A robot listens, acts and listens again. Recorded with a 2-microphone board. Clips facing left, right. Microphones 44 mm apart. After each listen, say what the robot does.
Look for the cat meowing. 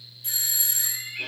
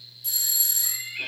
Turn 30° right.
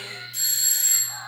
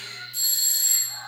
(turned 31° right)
Turn 10° left.
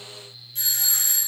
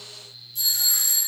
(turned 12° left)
Keep listening.
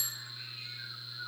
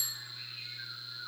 Turn 15° right.
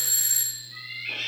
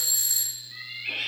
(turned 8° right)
Turn 15° right.
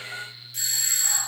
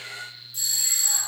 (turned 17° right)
Facing the cat meowing, 2 to 4 m away.